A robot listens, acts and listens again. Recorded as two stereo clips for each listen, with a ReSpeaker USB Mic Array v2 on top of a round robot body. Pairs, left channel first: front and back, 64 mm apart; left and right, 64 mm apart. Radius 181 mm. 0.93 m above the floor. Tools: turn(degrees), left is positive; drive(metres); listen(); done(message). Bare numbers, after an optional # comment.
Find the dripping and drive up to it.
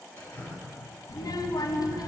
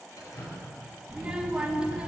# The dripping: 60° left.
turn(60)
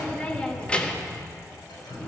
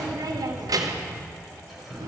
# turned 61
drive(1.0)
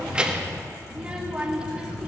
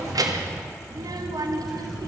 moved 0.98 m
listen()
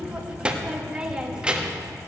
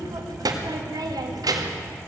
listen()
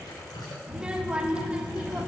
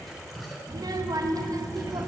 drive(1.0)
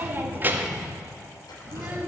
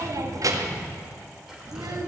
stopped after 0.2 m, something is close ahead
listen()
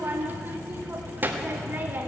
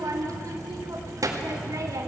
listen()
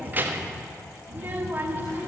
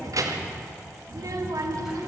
done("Facing where the dripping came from. I can't hear it now. I did not reach it.")